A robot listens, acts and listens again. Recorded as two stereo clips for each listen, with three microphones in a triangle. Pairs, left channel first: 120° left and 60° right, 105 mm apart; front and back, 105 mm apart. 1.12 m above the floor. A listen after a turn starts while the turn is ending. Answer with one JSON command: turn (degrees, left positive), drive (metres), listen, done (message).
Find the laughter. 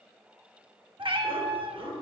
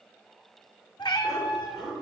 {"turn": -85}
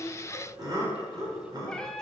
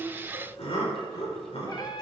{"turn": -10}
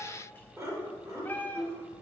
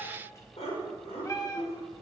{"done": "Facing the laughter, over 4 m away."}